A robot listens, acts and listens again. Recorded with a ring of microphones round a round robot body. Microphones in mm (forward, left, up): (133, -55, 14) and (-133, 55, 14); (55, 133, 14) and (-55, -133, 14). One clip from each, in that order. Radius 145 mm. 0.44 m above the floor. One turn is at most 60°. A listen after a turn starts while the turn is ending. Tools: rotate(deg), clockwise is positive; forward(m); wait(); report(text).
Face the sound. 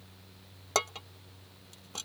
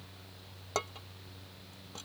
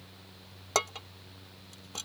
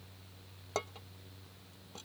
rotate(-30)
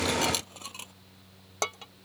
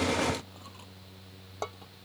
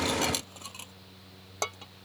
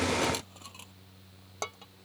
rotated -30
report("Found it: dishes clattering, straight ahead.")